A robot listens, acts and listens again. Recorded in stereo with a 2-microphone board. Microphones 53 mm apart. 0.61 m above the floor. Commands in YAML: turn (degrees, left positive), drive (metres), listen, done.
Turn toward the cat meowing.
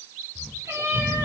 turn: -65
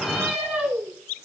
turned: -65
turn: -10
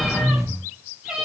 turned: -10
turn: -15
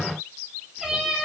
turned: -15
done: "Found it: a cat meowing, straight ahead, over 4 m away."